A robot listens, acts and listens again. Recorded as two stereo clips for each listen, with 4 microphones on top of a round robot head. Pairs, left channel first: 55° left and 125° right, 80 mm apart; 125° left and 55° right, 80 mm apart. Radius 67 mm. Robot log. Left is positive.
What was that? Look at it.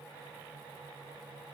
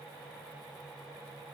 cmd idle
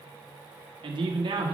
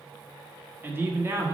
note: The man speaking: 110° right.
cmd yaw -110
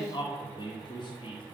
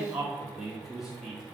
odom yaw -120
note: The man speaking is now 35° left.
cmd yaw +35
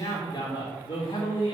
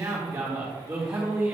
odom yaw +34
note: The man speaking is now 15° left.
cmd yaw +15
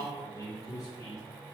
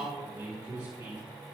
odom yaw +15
end: Found it: a man speaking, straight ahead.